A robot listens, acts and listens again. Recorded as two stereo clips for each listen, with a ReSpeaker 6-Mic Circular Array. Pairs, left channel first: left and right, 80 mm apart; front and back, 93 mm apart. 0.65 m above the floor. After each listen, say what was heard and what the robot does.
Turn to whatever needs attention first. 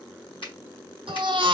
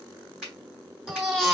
The baby crying: 90° right. Turn 90° right.
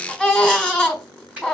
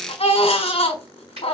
The baby crying is now 10° left. Turn 10° left.
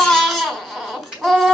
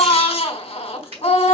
Facing the baby crying, 1 to 2 m away.